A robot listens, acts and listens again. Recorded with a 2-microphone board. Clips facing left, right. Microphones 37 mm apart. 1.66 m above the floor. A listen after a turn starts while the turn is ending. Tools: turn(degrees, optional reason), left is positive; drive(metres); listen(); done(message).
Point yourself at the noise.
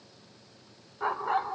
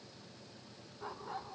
turn(degrees=60, reason="The dog barking: about 60° left or 120° left.")
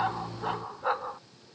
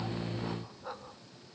turn(degrees=60, reason="So it is at 60° left.")
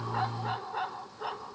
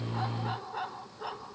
turn(degrees=10, reason="The dog barking is now 10° left.")
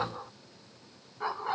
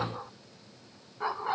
done("Found it: a dog barking, straight ahead.")